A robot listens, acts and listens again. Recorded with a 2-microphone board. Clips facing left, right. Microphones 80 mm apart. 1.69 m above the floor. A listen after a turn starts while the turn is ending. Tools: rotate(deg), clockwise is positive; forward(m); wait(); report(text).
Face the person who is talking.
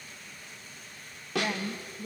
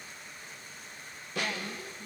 rotate(-55)
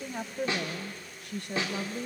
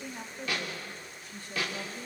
rotate(-70)
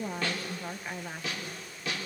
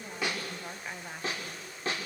report("Facing the woman speaking.")